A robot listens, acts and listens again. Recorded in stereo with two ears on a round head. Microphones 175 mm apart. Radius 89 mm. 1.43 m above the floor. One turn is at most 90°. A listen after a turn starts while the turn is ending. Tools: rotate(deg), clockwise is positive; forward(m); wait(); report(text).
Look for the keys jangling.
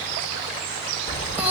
rotate(-20)
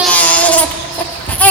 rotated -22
rotate(-30)
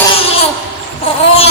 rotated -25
rotate(-90)
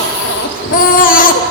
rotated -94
rotate(-45)
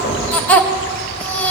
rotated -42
wait()
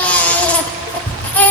rotate(-10)
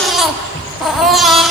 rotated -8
report("Found it: keys jangling, straight ahead, 2 to 4 m away.")